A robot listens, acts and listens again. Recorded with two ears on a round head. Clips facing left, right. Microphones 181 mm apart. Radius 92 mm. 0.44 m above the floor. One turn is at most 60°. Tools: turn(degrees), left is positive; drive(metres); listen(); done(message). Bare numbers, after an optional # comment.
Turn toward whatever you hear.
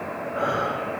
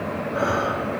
# The breathing: about 35° right or 145° right.
turn(-35)
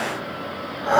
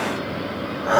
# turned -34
done("Facing the breathing.")